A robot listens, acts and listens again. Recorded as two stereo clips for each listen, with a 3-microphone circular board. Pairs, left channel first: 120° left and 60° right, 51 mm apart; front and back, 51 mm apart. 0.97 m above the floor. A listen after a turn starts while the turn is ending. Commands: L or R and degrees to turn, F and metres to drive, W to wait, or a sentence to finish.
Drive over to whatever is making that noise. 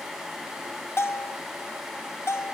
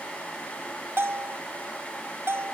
L145
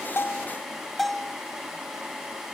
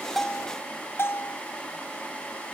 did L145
L30
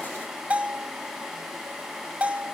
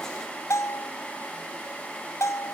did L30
F1.0
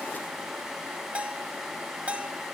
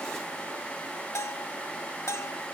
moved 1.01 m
F1.0
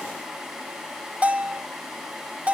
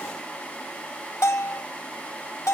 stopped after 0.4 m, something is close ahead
I am next to the bell.